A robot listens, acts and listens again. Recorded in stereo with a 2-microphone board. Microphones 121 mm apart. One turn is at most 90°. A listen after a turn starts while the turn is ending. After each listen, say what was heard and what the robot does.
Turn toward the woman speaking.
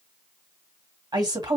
The woman speaking: about 35° right or 145° right. Turn 35° right.
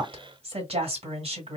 So it is at 100° right. Turn 90° right.
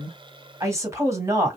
The woman speaking is now 30° right. Turn 30° right.
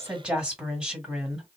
The woman speaking is now 10° right. Turn 10° right.
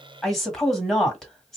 Found it: a woman speaking, straight ahead.